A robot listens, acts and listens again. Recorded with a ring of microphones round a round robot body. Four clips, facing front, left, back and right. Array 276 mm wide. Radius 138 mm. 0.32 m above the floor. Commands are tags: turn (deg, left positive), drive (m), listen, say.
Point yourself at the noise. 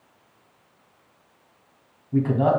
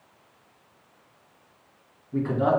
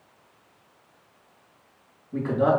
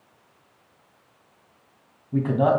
<turn deg="-50"/>
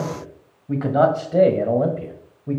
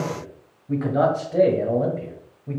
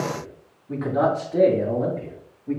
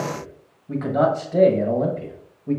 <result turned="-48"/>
<turn deg="-20"/>
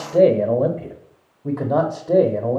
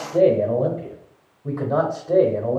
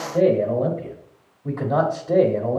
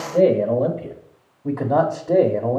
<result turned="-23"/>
<turn deg="-50"/>
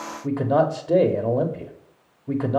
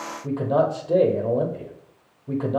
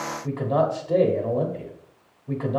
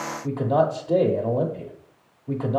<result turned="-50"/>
<say>Facing the man speaking, 1 to 2 m away.</say>